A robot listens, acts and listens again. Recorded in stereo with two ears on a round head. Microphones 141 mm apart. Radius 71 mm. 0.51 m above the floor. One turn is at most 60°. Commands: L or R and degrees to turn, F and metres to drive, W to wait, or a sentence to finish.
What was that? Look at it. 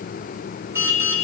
R15
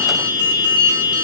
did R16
R60
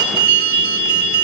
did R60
R60
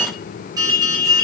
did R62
R25
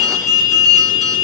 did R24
Found it: an alarm, straight ahead, over 4 m away.